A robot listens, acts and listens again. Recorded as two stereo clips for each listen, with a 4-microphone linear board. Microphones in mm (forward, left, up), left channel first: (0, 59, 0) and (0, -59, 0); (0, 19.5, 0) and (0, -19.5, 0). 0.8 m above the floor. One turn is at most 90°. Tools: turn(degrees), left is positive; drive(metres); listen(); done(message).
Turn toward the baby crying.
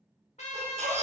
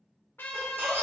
turn(degrees=-90)
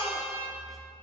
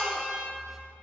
done("Found it: a baby crying, straight ahead, under 1 m away.")